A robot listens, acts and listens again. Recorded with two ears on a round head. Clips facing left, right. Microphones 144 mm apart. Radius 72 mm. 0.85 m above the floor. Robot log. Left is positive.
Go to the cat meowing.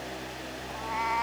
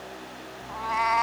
note: The cat meowing: about 75° right or 105° right.
cmd yaw -75
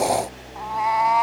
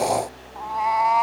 cmd fwd 1.0
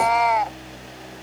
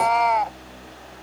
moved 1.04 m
cmd fwd 1.0
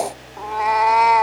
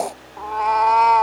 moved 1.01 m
note: The cat meowing is now 10° left.
cmd yaw +10
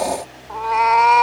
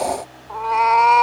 cmd fwd 1.0
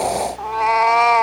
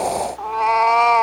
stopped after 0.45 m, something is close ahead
end: I am next to the cat meowing.